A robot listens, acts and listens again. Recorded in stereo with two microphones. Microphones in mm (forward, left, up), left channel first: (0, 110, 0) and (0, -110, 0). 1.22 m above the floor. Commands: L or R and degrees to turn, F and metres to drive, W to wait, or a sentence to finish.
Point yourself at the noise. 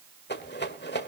L55
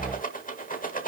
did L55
L50
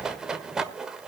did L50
Facing the rattle, 1 to 2 m away.